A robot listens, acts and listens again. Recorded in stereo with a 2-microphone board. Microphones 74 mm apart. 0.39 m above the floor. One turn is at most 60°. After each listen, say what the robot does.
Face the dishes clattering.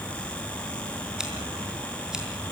Keep listening.
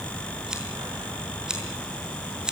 Keep listening.
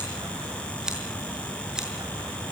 I can't make out dishes clattering, only scissors.